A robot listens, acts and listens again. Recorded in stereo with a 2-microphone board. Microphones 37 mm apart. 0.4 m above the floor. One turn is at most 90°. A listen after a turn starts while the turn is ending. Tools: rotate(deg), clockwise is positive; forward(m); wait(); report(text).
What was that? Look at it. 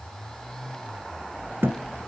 rotate(75)
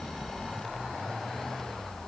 wait()
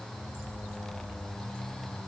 report("I heard a thud, but can't make it out now. It was about straight ahead or 30° right.")